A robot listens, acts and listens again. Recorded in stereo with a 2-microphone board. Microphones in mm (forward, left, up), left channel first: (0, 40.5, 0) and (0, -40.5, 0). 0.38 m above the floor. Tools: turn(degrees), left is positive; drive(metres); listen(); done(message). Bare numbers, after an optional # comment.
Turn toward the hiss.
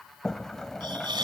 # The hiss: about 70° right or 110° right.
turn(-70)
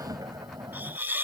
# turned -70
# So it is at 25° right.
turn(-25)
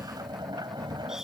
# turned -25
listen()
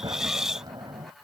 done("Facing the hiss.")